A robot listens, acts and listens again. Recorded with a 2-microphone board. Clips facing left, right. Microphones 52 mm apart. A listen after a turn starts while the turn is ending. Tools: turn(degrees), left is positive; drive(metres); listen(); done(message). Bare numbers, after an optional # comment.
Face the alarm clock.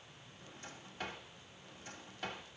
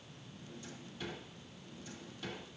listen()
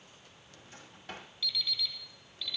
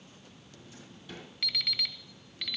# The alarm clock: about 70° right or 110° right.
turn(-70)
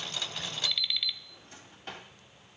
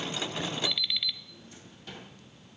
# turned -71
done("Facing the alarm clock, 1 to 2 m away.")